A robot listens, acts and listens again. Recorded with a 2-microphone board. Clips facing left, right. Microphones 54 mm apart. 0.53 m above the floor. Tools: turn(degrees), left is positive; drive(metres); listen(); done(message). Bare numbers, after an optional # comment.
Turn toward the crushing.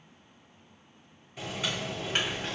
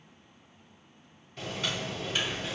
# The crushing: about 50° left or 130° left.
turn(50)
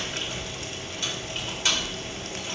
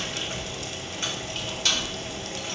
# So it is at 20° left.
turn(20)
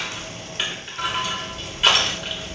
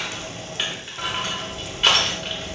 done("Found it: crushing, straight ahead.")